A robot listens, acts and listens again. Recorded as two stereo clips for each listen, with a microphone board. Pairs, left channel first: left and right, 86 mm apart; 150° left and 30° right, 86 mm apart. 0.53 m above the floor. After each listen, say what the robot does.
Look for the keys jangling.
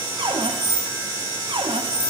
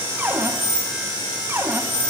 Turn 170° left.
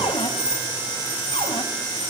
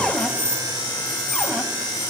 Turn 25° right.
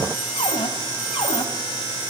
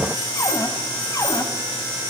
Keep listening.
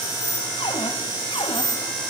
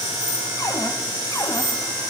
Facing the keys jangling, over 4 m away.